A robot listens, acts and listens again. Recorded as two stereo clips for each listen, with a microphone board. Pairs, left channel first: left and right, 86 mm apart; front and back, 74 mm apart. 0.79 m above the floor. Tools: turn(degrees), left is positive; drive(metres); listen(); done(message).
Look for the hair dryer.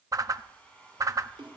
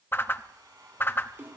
turn(degrees=165)
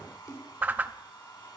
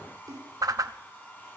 turn(degrees=60)
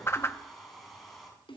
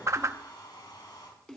done("Found it: a hair dryer, straight ahead.")